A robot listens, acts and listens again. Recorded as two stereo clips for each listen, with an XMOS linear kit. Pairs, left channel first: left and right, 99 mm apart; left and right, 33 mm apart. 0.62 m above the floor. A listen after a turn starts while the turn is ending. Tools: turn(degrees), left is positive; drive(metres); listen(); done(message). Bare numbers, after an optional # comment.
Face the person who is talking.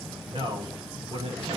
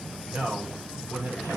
# The man speaking: about 65° right or 115° right.
turn(-65)
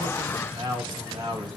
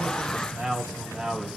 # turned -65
# So it is at 45° right.
turn(-45)
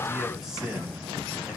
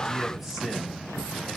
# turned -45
listen()
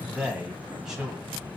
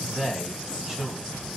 done("Facing the man speaking, over 4 m away.")